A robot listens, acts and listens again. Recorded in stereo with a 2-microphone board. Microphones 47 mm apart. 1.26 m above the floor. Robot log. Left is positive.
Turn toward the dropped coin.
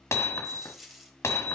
cmd yaw -30
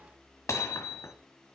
cmd idle
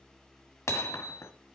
end: I heard a dropped coin, but can't make it out now. It was about 25° left or 145° right.